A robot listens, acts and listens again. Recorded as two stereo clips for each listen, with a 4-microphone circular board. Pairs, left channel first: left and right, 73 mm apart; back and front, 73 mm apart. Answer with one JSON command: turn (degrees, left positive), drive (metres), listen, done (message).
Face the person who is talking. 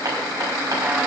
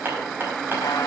{"listen": true}
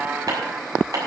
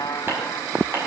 {"listen": true}
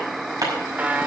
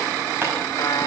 {"done": "I can't make out anyone speaking to turn to."}